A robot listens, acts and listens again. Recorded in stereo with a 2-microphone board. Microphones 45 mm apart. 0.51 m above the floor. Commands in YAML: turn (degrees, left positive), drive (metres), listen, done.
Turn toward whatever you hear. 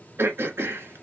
turn: -65
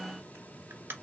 turn: -55
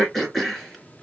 done: "Facing the throat clearing."